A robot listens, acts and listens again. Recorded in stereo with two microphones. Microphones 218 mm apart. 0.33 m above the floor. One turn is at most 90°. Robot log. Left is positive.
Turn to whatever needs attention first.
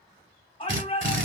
note: The shout: about 25° left or 155° left.
cmd yaw +25
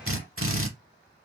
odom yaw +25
cmd idle
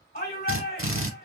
note: So it is at 125° left.
cmd yaw +90
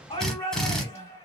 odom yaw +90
note: The shout is now 35° left.
cmd yaw +35
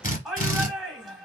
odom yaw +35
end: Found it: a shout, straight ahead.